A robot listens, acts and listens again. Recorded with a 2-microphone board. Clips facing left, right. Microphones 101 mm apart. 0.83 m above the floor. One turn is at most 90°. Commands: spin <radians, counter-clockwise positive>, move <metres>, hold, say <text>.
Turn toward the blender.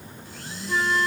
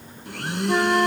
spin -1.22
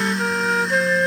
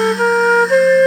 say Facing the blender.